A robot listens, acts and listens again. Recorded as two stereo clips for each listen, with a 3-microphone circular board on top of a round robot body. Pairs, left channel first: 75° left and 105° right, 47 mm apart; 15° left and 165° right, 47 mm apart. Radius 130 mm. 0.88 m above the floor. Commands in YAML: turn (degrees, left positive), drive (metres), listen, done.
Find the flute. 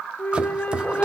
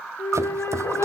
turn: 20
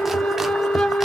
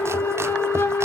done: "Found it: a flute, straight ahead."